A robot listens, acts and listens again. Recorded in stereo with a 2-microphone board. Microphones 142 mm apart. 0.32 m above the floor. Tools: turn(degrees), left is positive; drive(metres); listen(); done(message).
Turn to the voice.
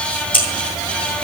listen()
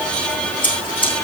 listen()
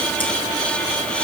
done("I can't make out anyone speaking, only scissors.")